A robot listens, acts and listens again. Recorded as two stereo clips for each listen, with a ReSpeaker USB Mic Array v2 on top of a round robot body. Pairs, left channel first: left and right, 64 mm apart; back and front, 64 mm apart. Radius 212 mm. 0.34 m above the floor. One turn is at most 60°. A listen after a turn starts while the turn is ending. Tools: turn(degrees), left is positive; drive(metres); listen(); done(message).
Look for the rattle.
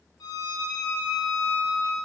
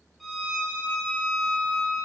listen()
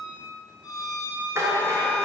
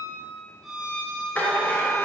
turn(degrees=-60)
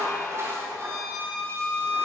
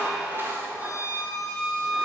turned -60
turn(degrees=-50)
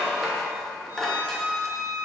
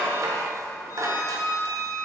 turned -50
done("Found it: a rattle, straight ahead.")